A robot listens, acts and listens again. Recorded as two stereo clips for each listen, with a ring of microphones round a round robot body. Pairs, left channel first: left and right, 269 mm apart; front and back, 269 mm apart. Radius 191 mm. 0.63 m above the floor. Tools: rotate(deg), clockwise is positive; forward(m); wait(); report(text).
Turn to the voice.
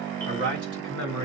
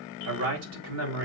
rotate(145)
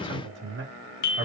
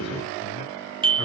wait()
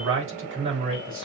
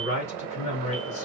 rotate(50)
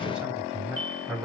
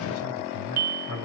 report("Found it: a man speaking, straight ahead.")